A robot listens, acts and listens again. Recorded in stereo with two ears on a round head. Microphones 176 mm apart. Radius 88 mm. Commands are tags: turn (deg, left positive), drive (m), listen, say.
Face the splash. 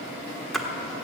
<turn deg="30"/>
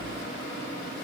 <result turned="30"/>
<listen/>
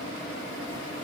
<say>I heard a splash, but can't make it out now. It was about 30° right or 150° left.</say>